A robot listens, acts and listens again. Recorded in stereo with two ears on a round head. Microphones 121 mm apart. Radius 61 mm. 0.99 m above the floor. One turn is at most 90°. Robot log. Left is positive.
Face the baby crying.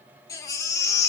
note: The baby crying: about 25° left or 155° left.
cmd yaw +25
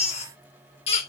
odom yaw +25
note: So it is at 130° left.
cmd yaw +90
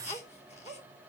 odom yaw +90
note: The baby crying is now 50° left.
cmd yaw +50
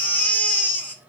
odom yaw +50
note: The baby crying is now 15° left.
cmd yaw +15
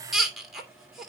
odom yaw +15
end: Facing the baby crying.